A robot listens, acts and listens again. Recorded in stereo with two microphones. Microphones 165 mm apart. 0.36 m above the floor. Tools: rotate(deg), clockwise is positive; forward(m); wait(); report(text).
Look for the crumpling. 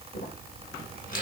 rotate(-55)
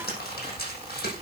rotate(-70)
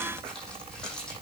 wait()
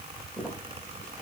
report("Facing the crumpling.")